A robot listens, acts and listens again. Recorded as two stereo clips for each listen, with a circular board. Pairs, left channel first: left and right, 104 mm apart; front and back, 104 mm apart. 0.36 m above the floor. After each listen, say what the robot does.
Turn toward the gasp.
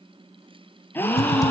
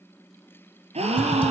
Turn 160° left.
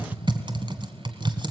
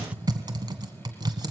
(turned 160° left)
Facing where the gasp came from. I can't hear it now.